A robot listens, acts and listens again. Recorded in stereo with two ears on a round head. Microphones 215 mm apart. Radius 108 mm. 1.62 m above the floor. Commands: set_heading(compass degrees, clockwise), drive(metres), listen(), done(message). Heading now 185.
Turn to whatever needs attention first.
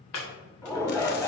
set_heading(155)
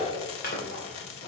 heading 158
set_heading(18)
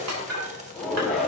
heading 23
done("Facing the shout.")